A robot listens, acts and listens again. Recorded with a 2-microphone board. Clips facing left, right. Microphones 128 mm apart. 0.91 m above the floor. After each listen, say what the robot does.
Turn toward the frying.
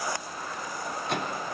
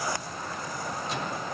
Keep listening.
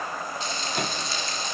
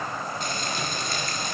Turn 50° right.
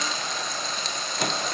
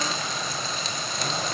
Facing the frying, 2 to 4 m away.